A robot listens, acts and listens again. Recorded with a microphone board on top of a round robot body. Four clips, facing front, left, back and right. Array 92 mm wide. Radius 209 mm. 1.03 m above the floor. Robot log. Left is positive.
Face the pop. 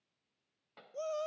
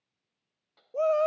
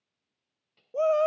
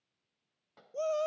note: The pop: 20° right.
cmd yaw -20
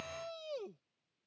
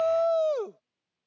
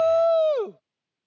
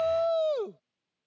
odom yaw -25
end: I heard a pop from this way, but can't make it out now.